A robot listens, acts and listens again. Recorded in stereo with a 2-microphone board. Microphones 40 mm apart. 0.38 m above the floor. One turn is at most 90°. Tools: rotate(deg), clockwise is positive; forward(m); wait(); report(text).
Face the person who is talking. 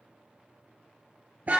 wait()
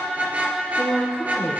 rotate(-90)
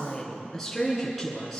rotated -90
report("Facing the woman speaking.")